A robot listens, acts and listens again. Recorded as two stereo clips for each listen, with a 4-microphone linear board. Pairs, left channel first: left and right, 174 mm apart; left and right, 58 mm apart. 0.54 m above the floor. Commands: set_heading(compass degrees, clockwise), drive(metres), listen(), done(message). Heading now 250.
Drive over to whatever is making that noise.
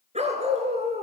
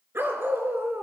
set_heading(295)
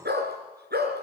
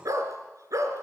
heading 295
set_heading(30)
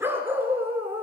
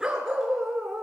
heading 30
set_heading(45)
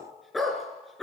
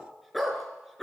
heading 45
drive(1.0)
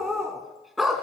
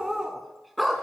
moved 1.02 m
drive(1.0)
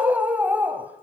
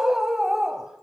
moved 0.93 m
set_heading(55)
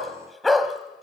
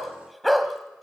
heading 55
drive(1.0)
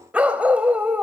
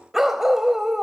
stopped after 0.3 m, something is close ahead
set_heading(65)
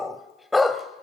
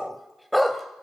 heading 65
done("I am next to the dog barking.")